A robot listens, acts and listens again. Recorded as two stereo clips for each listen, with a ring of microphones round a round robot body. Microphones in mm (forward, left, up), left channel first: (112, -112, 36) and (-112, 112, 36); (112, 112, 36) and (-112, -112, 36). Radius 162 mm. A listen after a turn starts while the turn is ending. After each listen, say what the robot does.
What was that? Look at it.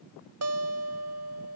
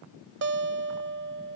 Turn 175° left.
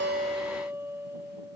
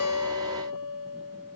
Turn 55° left.
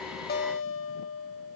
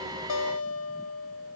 Facing the guitar.